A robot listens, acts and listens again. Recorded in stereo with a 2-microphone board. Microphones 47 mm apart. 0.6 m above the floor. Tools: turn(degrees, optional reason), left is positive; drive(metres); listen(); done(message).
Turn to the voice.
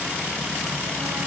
listen()
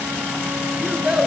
turn(degrees=-15, reason="The child speaking: about 15° right or 165° right.")
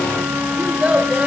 turn(degrees=-150, reason="So it is at 150° right.")
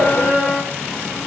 listen()
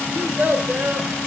turn(degrees=-40, reason="The child speaking is now 40° right.")
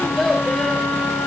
done("Facing the child speaking.")